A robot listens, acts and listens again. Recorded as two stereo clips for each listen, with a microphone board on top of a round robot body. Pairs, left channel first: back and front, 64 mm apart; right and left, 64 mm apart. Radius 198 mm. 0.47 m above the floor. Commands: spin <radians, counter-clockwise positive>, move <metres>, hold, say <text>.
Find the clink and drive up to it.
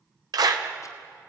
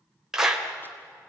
hold
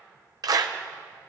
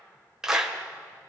hold
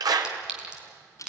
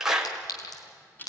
spin -1.31
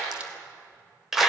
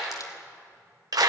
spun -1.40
hold
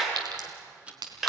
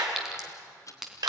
move 1.0
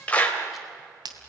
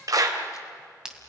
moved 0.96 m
spin 0.17
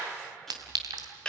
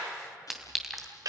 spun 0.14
move 1.0
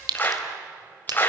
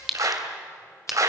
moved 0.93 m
move 1.0
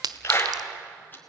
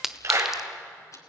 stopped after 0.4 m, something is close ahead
say Arrived at the clink, straight ahead.